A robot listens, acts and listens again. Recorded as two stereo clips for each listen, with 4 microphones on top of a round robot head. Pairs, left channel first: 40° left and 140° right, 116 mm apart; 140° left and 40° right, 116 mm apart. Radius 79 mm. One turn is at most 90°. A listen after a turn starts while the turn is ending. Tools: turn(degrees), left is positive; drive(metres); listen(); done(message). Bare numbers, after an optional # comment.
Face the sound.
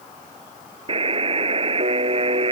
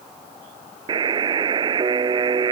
# The buzzer: 95° right.
turn(-90)
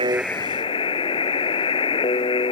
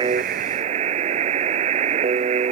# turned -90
# The buzzer is now 10° right.
turn(-10)
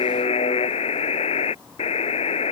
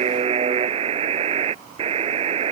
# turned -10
done("Facing the buzzer.")